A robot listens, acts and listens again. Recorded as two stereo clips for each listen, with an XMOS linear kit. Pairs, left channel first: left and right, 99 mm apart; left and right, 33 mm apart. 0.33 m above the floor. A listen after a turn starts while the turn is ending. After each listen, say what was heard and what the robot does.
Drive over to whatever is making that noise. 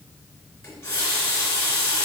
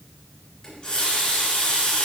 The running tap: about 30° left or 150° left. Turn 30° left.
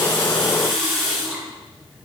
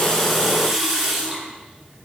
Drive 1.0 m forward.
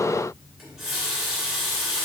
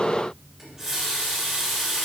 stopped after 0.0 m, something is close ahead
Blocked. The running tap is further on, straight ahead.